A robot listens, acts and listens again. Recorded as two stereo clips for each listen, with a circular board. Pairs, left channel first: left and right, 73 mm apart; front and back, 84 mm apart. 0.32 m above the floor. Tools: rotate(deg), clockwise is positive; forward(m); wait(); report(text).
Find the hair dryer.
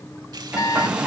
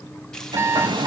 rotate(165)
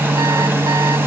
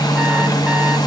rotate(30)
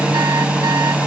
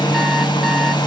rotate(15)
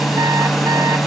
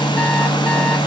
report("Facing the hair dryer, 2 to 4 m away.")